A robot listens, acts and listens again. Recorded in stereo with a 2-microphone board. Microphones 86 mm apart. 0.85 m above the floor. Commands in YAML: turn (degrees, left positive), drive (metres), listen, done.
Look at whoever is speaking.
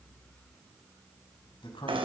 turn: 90
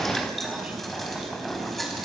listen: true
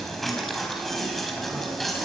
listen: true
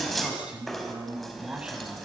turn: -10
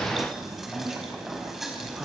done: "Found it: a man speaking, straight ahead."